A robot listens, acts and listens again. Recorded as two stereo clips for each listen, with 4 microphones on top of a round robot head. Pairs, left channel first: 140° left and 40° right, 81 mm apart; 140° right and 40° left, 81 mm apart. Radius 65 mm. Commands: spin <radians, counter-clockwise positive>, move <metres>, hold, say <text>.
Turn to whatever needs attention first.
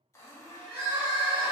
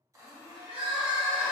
spin 0.44
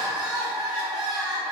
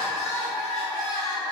say Found it: crying, straight ahead, under 1 m away.